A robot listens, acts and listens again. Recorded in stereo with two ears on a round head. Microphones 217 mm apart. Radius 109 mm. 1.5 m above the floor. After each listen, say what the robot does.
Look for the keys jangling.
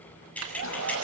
Turn 30° left.
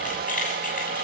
Turn 145° left.
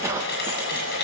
Keep listening.
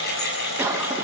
Turn 45° left.
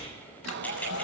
Keep listening.
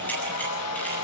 Keep listening.
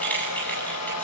Found it: keys jangling, straight ahead.